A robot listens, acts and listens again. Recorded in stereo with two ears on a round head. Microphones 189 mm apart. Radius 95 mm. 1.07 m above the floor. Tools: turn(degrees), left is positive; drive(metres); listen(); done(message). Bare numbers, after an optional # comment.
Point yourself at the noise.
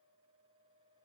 listen()
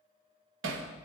# The hammering: about 65° right or 115° right.
turn(-65)
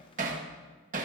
# So it is at 40° right.
turn(-40)
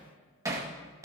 # The hammering is now 15° right.
turn(-15)
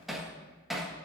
done("Facing the hammering.")